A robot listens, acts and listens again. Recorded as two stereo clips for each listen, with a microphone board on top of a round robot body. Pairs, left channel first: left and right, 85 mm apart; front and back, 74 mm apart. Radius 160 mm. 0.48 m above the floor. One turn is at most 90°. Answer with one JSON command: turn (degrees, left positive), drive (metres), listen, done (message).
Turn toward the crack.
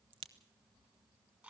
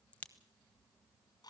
{"turn": -70}
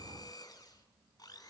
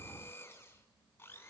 {"done": "I heard a crack from this way, but can't make it out now."}